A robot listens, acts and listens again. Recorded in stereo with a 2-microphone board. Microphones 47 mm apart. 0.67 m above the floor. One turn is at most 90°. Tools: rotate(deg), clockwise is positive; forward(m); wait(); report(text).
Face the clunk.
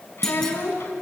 rotate(-30)
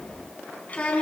wait()
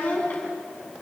report("I heard a clunk, but can't make it out now. It was about 20° right or 140° left.")